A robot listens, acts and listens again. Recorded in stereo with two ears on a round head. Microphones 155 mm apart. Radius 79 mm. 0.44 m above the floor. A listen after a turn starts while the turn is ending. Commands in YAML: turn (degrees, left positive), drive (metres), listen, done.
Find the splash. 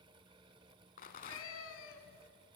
listen: true
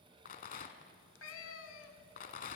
listen: true
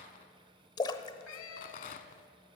turn: 25
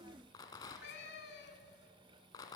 listen: true
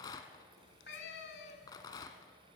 done: "I heard a splash, but can't make it out now. It was about straight ahead or 130° left."